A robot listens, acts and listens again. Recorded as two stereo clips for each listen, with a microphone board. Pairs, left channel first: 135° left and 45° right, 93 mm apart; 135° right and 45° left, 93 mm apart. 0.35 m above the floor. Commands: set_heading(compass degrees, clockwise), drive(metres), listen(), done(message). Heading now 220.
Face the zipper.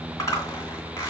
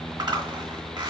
set_heading(140)
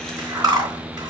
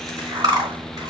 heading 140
done("Facing the zipper.")